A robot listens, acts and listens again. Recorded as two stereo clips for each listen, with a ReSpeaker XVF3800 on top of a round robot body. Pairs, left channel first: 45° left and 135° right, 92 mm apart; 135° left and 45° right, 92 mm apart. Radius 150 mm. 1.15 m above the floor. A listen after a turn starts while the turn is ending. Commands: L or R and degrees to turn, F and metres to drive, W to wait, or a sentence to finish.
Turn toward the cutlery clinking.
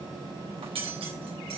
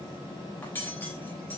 R155
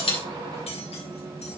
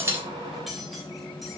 W
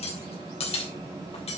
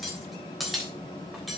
L40
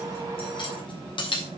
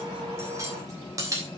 L10
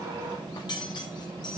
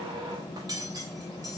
Facing the cutlery clinking, 2 to 4 m away.